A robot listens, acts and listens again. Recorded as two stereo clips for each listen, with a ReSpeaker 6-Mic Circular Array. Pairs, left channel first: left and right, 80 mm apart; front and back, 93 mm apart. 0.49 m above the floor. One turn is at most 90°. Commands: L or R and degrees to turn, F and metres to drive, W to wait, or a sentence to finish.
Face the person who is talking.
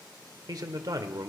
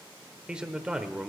R90
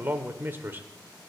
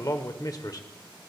R35
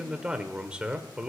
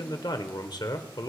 R15
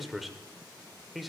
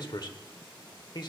Facing the man speaking, 1 to 2 m away.